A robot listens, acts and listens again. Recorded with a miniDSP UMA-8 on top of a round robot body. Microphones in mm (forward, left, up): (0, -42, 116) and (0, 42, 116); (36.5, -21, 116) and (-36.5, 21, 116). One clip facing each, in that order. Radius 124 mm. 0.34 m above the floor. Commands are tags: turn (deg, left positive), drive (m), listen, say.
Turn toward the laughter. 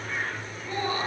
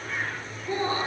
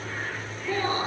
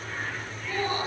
<turn deg="25"/>
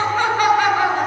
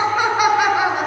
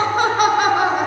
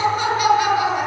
<turn deg="10"/>
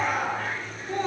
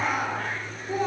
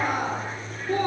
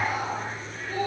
<say>Found it: laughter, straight ahead.</say>